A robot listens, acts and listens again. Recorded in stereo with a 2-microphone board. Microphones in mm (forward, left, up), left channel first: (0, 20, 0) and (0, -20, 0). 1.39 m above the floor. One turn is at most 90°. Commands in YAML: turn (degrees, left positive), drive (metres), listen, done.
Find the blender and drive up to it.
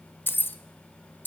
listen: true
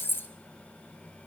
listen: true
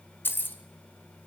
done: "I can't make out a blender, only keys jangling."